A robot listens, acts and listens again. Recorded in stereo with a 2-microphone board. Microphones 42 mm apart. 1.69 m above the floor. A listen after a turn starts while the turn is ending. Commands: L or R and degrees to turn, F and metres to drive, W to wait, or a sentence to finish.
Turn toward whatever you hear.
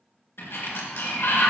L70
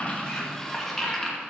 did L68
Found it: a sliding door, straight ahead, 2 to 4 m away.